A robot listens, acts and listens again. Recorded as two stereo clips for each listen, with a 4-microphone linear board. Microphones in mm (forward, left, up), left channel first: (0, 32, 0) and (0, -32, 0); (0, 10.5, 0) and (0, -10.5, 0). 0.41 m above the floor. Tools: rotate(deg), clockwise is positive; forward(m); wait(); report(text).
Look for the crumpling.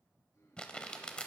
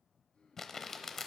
rotate(-15)
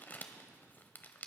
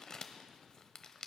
rotate(-150)
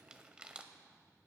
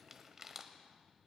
rotate(15)
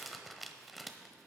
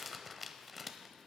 report("Found it: crumpling, straight ahead.")